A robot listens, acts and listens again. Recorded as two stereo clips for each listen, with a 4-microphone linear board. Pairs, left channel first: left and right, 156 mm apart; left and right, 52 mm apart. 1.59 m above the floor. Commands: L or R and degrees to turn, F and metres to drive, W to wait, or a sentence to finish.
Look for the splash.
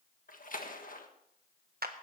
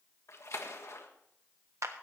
L60
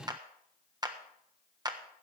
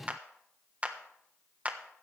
W
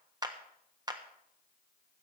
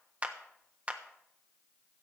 I heard a splash, but can't make it out now. It was about straight ahead or 60° left.